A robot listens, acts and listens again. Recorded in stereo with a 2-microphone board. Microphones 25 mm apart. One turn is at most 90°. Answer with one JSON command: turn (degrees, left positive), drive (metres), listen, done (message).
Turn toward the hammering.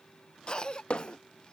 {"turn": 55}
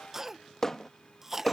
{"turn": 25}
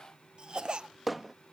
{"done": "Found it: hammering, straight ahead."}